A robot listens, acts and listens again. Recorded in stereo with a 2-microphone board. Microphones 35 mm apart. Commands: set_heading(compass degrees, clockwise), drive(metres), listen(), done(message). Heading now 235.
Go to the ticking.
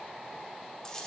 listen()
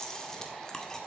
listen()
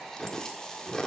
done("I can't make out ticking to turn to.")